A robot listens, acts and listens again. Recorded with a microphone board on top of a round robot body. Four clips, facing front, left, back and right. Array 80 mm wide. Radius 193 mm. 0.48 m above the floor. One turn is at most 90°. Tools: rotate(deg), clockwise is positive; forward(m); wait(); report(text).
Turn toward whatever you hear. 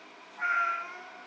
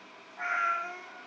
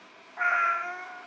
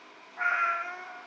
rotate(90)
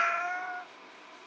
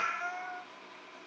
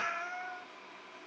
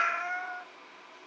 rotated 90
rotate(30)
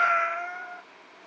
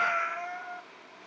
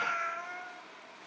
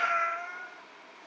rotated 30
report("Found it: a cat meowing, straight ahead, 2 to 4 m away.")